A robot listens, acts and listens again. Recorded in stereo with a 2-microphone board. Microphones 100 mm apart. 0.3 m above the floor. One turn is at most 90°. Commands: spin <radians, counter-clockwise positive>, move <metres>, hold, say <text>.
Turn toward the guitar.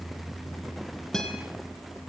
spin 0.52
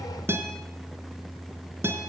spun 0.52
spin -0.44
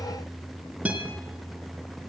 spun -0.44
spin -0.26
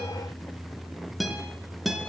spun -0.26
say Facing the guitar, 2 to 4 m away.